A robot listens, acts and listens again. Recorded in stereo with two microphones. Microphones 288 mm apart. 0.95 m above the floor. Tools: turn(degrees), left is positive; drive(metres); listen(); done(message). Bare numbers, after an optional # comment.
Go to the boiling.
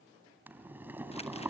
turn(-30)
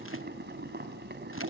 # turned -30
# So it is at 145° right.
turn(-145)
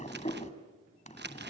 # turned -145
# The boiling is now 25° left.
turn(25)
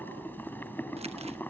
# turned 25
drive(1.0)
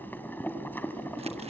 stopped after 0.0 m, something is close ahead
done("Something is in my way. I am facing the boiling but have not reached it.")